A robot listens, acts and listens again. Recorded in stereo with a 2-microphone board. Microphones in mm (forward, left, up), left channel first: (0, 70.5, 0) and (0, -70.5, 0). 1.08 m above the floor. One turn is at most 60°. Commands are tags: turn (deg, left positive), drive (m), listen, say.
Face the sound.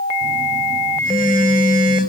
<turn deg="60"/>
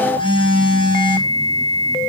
<turn deg="35"/>
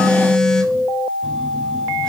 <say>Found it: a phone buzzing, straight ahead, 2 to 4 m away.</say>